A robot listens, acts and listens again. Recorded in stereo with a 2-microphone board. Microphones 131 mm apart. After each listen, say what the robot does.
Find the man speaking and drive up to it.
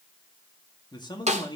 Turn 35° left.
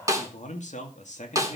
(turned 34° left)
Turn 115° left.
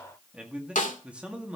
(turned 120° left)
Turn 10° right.
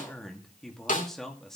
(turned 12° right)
Drive 1.0 m forward.
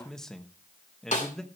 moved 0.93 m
Drive 1.0 m forward.
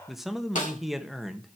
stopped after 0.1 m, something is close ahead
I am next to the man speaking.